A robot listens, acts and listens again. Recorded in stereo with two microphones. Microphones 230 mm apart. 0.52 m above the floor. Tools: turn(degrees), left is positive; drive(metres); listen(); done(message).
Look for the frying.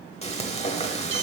turn(degrees=25)
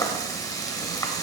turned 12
turn(degrees=15)
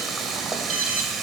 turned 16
done("Found it: frying, straight ahead, 1 to 2 m away.")